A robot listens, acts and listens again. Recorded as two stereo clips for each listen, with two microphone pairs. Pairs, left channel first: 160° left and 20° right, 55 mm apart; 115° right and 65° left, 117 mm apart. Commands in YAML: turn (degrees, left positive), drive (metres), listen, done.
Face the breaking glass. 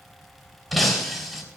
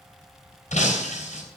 turn: -110
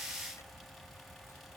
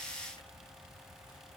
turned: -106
done: "I heard breaking glass from this way, but can't make it out now."